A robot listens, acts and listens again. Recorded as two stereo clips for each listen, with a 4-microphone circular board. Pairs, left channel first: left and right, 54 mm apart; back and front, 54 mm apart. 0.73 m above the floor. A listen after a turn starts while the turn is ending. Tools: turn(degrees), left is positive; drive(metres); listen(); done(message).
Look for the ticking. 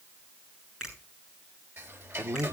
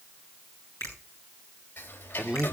turn(degrees=-125)
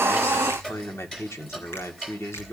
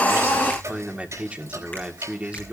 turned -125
turn(degrees=15)
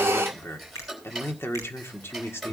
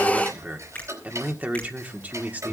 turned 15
done("Found it: ticking, straight ahead.")